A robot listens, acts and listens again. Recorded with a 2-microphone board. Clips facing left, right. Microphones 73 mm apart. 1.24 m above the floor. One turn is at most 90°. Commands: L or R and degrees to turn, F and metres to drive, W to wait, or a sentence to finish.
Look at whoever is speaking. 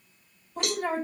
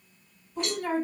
L45
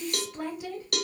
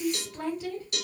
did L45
Found it: a woman speaking, straight ahead, 1 to 2 m away.